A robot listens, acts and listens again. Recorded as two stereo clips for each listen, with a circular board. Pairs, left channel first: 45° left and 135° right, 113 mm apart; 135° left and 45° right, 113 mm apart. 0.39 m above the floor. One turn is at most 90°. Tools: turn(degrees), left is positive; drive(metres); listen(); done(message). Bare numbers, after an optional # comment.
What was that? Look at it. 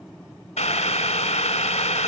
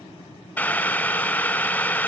# The boiling: 60° left.
turn(60)
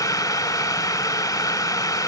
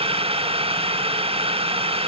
# The boiling is now 15° right.
turn(-15)
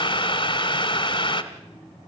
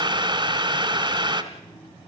done("Facing the boiling.")